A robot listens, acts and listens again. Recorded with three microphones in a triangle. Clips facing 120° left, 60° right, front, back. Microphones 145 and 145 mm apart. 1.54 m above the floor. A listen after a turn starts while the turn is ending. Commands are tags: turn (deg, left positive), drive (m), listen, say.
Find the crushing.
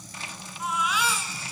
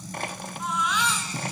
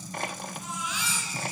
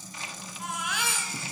<turn deg="-30"/>
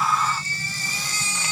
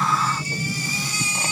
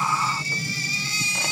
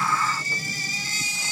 <listen/>
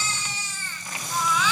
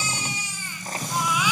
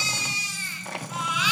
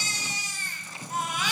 <listen/>
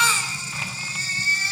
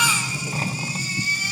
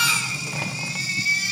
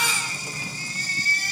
<say>Facing where the crushing came from. I can't hear it now.</say>